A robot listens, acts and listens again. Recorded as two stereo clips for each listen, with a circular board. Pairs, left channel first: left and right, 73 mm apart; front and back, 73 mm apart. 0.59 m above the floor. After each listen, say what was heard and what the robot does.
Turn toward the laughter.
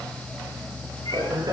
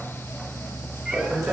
The laughter: 105° right. Turn 105° right.
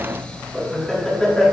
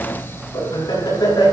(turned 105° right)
The laughter is now 10° left. Turn 10° left.
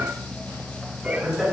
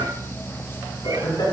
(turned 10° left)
Found it: laughter, straight ahead.